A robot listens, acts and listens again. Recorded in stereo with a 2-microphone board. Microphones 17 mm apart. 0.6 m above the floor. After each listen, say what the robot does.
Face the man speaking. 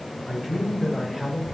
Turn 15° right.
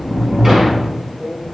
Turn 30° right.
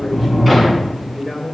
Turn 30° left.
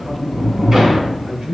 Turn 40° right.
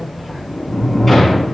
Facing the man speaking, 2 to 4 m away.